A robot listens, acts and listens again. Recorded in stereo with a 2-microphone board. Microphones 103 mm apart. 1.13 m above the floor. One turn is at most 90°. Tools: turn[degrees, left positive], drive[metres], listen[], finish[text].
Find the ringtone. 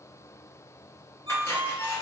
Thought: The ringtone: about 75° right or 105° right.
Action: turn[-75]
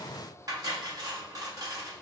Action: listen[]
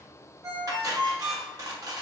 Thought: So it is at 35° right.
Action: turn[-35]
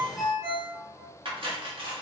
Action: finish[Facing the ringtone.]